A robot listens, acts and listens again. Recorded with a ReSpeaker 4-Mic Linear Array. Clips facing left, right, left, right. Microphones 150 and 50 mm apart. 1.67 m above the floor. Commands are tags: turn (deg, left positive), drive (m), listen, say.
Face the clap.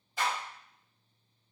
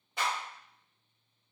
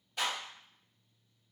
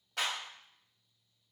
<turn deg="-70"/>
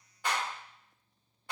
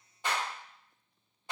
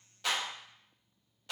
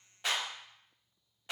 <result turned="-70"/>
<turn deg="-20"/>
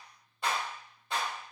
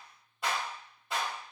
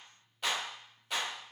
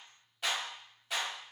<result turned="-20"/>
<say>Facing the clap, 1 to 2 m away.</say>